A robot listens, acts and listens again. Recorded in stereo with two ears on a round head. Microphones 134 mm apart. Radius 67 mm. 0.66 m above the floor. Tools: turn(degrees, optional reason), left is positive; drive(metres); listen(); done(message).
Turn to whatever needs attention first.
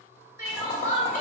turn(degrees=-20, reason="The crying: about 20° right or 160° right.")
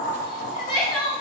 done("Found it: crying, straight ahead.")